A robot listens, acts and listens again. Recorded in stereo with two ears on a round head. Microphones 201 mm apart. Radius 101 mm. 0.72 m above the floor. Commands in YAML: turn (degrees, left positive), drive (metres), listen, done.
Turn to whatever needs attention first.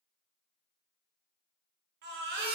turn: -50
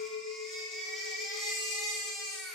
done: "Facing the baby crying, under 1 m away."